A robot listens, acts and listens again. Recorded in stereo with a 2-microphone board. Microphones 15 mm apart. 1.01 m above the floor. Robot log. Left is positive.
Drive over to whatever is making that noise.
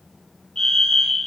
note: The fire alarm: about 50° left or 130° left.
cmd yaw +50
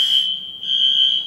cmd fwd 1.0
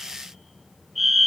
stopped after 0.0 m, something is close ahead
end: Something is in my way. I am facing the fire alarm but have not reached it.